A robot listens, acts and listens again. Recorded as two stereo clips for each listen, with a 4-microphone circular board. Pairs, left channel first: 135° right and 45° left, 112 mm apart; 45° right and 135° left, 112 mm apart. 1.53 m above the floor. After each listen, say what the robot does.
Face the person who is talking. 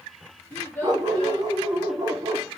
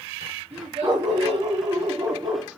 Turn 155° left.
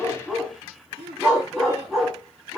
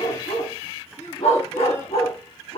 Turn 25° left.
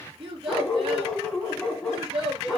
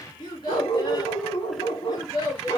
Facing the child speaking, 2 to 4 m away.